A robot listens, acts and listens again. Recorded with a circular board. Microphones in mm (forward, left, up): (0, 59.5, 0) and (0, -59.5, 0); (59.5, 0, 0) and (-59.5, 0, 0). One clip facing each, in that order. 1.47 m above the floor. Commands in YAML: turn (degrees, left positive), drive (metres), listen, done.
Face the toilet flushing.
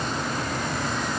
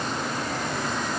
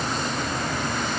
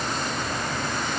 listen: true
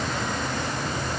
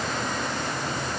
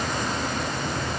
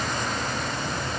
listen: true
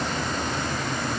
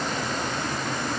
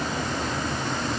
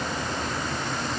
done: "I can't make out a toilet flushing to turn to."